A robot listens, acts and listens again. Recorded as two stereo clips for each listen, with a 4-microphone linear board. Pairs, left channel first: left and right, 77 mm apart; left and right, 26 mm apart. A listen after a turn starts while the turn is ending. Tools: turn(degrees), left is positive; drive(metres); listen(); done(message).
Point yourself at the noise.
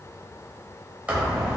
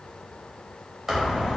turn(degrees=-20)
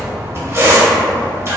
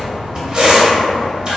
turn(degrees=-140)
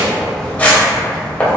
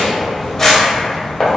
turn(degrees=25)
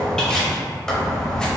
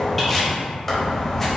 turn(degrees=15)
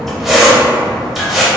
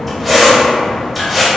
done("Facing the squeak, under 1 m away.")